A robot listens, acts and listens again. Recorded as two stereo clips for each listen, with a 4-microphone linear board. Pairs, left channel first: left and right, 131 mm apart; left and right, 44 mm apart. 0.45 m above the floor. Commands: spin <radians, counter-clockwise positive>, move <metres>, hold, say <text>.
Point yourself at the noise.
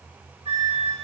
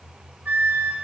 spin -0.96
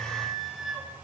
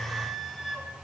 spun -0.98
say Facing the flute, under 1 m away.